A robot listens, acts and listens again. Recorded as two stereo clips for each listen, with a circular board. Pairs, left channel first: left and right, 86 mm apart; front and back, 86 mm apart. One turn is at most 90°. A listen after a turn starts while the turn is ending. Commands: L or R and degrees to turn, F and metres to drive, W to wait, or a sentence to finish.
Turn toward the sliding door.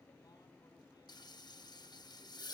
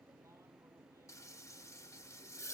W
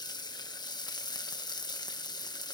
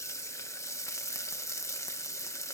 W
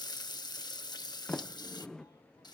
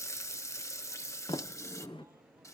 L10
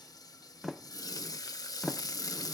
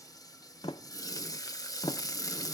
Found it: a sliding door, straight ahead.